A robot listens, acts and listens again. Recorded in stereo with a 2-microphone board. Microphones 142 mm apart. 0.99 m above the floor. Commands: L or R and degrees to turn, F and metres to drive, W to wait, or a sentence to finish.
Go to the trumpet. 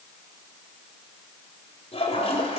W
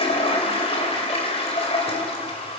W
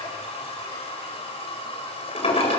I can't make out a trumpet to turn to.